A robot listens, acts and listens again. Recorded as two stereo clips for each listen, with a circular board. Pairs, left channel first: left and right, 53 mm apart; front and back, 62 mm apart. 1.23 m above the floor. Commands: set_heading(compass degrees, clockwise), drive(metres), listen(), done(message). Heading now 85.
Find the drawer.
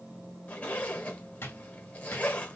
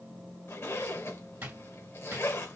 set_heading(320)
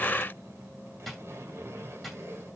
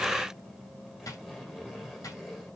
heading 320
done("Facing the drawer, 1 to 2 m away.")